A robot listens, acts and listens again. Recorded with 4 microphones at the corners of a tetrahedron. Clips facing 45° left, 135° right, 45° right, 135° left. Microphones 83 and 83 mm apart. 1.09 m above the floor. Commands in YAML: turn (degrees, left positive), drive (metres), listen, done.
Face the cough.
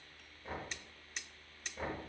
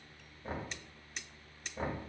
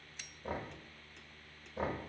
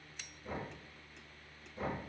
listen: true
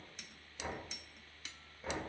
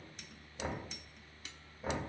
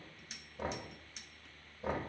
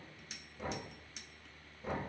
listen: true
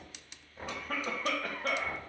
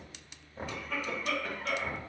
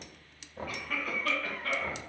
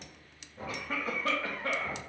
turn: 75
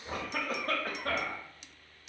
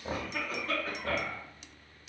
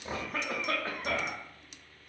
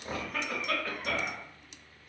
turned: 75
turn: 15
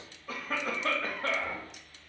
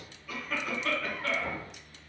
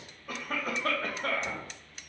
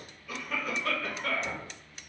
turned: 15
done: "Found it: a cough, straight ahead."